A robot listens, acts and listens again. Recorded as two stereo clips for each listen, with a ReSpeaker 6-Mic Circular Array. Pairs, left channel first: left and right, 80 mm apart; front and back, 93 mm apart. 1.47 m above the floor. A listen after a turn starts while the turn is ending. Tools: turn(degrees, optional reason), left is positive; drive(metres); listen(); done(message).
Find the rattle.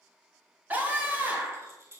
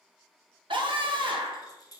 turn(degrees=-40, reason="The rattle: 40° right.")
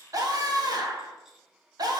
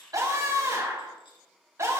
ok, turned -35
listen()
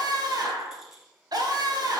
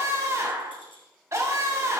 done("Found it: a rattle, straight ahead, 1 to 2 m away.")